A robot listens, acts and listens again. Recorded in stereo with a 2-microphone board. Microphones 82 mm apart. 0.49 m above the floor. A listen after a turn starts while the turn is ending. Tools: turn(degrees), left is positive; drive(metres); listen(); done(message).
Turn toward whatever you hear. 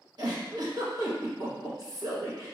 turn(degrees=-55)
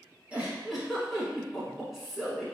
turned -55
done("Found it: a giggle, straight ahead, 1 to 2 m away.")